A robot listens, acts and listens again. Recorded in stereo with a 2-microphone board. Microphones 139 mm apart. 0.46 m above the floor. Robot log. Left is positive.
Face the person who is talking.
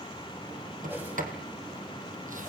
cmd idle
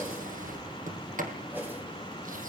cmd idle
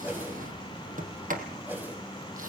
end: I can't make out anyone speaking, only a whoosh and a sliding door.